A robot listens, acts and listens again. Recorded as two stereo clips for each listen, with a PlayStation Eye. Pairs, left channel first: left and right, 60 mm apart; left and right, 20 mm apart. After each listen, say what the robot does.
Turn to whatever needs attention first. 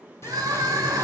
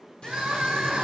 Turn 90° right.
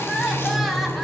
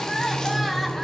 Keep listening.
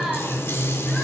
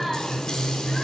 Keep listening.
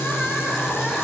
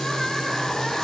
Facing where the crying came from. I can't hear it now.